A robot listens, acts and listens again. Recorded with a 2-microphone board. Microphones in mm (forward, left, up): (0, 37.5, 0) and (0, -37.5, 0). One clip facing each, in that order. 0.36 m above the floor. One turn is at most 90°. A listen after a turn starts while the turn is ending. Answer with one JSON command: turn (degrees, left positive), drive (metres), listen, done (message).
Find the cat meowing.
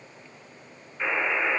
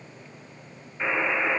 {"listen": true}
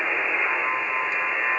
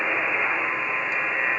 {"listen": true}
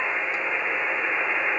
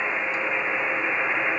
{"done": "I can't make out a cat meowing, only a buzzer."}